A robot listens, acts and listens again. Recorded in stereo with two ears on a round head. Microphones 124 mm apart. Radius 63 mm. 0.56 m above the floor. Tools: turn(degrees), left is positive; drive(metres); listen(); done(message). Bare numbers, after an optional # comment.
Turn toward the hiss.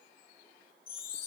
listen()
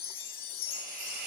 # The hiss: about 70° right or 110° right.
turn(-70)
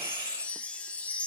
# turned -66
# So it is at 30° right.
turn(-30)
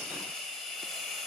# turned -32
done("Found it: a hiss, straight ahead.")